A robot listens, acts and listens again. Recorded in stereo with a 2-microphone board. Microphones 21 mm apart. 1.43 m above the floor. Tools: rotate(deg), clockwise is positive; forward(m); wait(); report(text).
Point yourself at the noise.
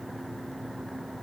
wait()
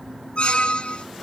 rotate(-55)
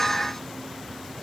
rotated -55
wait()
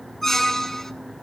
rotate(-15)
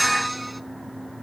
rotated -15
report("Facing the squeak.")